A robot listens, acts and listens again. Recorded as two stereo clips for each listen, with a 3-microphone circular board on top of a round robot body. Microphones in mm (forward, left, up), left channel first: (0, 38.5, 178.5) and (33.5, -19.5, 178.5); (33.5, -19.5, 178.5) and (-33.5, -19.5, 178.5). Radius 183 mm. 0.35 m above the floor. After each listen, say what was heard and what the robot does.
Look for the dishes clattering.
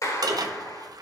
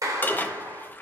The dishes clattering: 60° right. Turn 60° right.
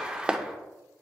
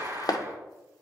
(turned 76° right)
The dishes clattering is now 15° left. Turn 15° left.
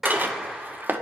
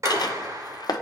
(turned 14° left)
Facing the dishes clattering.